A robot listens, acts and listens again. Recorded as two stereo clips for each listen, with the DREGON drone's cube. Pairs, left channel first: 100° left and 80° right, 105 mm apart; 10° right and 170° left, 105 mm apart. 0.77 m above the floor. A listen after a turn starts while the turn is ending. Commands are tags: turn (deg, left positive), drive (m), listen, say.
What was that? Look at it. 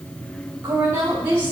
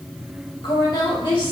<turn deg="-10"/>
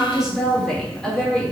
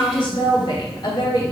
<turn deg="25"/>
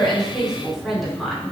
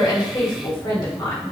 <turn deg="15"/>
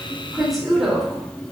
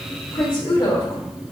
<turn deg="15"/>
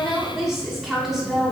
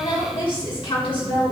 <say>Found it: a woman speaking, straight ahead.</say>